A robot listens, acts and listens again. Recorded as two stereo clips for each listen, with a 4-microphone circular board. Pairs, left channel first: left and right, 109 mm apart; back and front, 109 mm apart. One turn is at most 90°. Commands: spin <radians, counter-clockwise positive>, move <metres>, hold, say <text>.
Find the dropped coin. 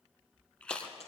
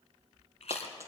spin 1.13
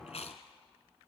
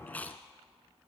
say Facing where the dropped coin came from. I can't hear it now.